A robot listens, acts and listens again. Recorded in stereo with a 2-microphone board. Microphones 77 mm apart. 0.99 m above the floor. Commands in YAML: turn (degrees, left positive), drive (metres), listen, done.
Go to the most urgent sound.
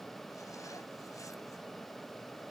listen: true
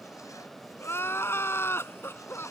turn: 35
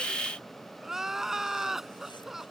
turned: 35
drive: 1.0
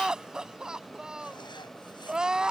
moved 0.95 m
turn: -10
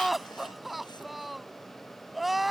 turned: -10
drive: 1.0
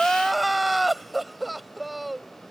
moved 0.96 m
drive: 1.0
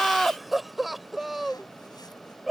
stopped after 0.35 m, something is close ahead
done: "Arrived at the crying, straight ahead."